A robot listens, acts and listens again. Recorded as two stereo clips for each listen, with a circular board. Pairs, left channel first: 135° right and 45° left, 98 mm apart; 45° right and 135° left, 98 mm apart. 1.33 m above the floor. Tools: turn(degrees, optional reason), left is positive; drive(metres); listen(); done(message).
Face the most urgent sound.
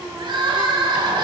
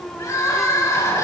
turn(degrees=10, reason="The crying: 10° left.")
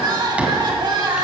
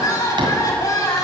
done("Found it: crying, straight ahead, 2 to 4 m away.")